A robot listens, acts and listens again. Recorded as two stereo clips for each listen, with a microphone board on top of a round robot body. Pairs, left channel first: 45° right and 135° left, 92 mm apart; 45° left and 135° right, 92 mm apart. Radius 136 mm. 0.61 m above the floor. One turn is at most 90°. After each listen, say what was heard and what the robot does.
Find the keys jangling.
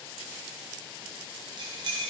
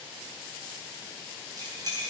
The keys jangling: straight behind. Turn 90° left.
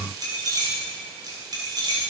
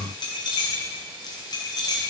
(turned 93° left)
The keys jangling is now 90° left. Turn 90° left.
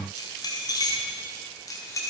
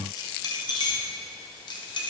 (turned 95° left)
The keys jangling is now 10° left. Turn 10° left.
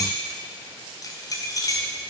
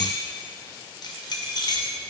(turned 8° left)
Found it: keys jangling, straight ahead, 2 to 4 m away.